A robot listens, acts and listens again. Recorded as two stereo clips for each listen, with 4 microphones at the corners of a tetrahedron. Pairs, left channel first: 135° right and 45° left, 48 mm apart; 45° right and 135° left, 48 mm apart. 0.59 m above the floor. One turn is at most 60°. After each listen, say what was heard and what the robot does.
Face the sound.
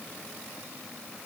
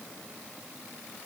Keep listening.
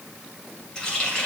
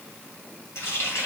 The running tap: 60° right. Turn 60° right.
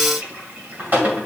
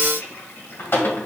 Facing the running tap, 2 to 4 m away.